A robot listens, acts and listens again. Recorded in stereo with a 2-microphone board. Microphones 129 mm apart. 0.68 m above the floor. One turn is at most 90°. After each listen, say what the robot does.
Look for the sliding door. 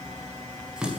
Keep listening.
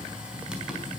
Keep listening.
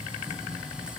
I can't make out a sliding door, only a running tap.